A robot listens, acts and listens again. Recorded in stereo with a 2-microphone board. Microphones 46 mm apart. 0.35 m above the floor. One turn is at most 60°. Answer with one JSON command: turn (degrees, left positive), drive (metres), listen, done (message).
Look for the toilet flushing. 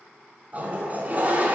{"turn": -35}
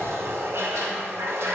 {"turn": -60}
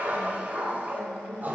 {"turn": -45}
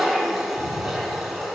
{"turn": -10}
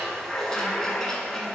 {"turn": 10}
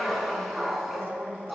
{"done": "Found it: a toilet flushing, straight ahead."}